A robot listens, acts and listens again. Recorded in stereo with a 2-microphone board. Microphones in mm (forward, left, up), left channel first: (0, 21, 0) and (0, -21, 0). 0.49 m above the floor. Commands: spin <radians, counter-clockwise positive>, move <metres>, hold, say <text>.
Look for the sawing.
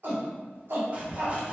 spin -0.52
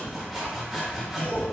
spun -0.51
say Found it: sawing, straight ahead, under 1 m away.